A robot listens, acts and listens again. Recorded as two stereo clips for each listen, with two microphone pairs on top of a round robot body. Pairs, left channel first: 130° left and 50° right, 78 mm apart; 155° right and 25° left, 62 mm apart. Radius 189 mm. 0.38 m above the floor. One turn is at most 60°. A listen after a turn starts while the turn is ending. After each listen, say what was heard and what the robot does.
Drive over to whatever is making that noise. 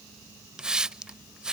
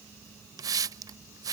The hiss: 25° left. Turn 25° left.
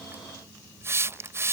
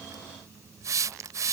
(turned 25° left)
Drive 1.0 m forward.
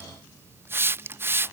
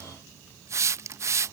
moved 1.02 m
Drive 1.0 m forward.
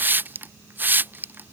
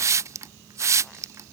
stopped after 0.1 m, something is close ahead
I am next to the hiss.